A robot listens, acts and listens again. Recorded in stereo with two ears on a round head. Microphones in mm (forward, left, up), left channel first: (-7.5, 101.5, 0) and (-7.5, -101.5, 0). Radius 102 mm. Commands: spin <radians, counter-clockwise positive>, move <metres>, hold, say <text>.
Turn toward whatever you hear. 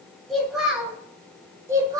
spin -0.35
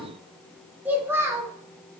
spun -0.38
spin -0.52
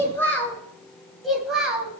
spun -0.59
spin -0.52
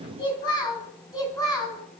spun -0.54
spin 0.26
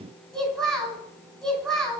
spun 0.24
say Facing the child speaking, 2 to 4 m away.